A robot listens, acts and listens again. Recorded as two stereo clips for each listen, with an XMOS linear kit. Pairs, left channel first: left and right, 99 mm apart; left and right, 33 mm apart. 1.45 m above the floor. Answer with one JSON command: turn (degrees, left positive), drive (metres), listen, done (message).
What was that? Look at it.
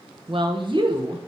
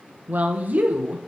{"turn": -55}
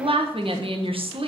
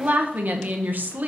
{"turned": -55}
{"turn": -65}
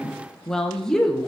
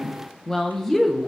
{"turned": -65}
{"done": "Facing the woman speaking."}